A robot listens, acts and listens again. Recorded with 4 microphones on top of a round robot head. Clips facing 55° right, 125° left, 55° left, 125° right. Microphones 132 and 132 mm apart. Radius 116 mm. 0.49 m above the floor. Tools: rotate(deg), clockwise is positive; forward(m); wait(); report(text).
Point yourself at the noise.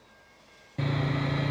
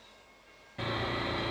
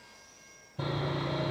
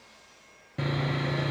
rotate(110)
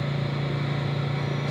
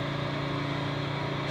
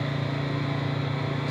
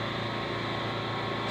report("Facing the sawing, 2 to 4 m away.")